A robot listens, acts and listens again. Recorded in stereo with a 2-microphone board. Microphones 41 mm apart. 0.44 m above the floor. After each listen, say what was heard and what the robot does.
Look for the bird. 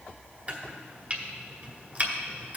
Keep listening.
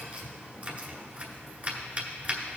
Keep listening.
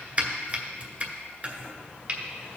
I can't make out a bird to turn to.